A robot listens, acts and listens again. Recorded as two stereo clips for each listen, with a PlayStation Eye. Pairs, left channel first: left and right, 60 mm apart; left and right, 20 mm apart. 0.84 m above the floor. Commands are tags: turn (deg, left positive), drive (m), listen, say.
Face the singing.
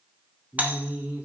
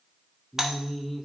<turn deg="-20"/>
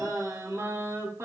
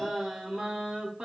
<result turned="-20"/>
<turn deg="-130"/>
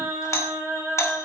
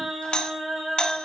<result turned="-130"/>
<turn deg="-30"/>
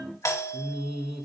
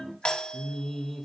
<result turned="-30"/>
<say>Found it: singing, straight ahead, 2 to 4 m away.</say>